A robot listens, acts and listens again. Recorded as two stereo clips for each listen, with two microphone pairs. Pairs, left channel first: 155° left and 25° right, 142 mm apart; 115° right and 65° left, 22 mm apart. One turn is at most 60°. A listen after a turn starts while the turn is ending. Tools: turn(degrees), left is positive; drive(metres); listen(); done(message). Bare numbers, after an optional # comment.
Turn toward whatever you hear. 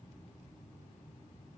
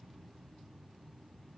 listen()
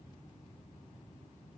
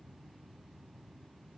listen()
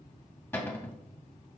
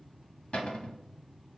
# The cupboard door: 135° right.
turn(-60)
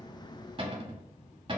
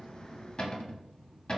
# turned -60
# The cupboard door is now 75° right.
turn(-60)
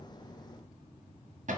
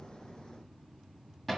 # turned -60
# The cupboard door is now 30° right.
turn(-30)
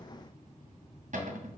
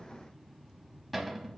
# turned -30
# The cupboard door is now 20° right.
turn(-20)
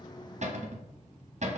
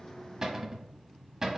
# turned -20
done("Facing the cupboard door, under 1 m away.")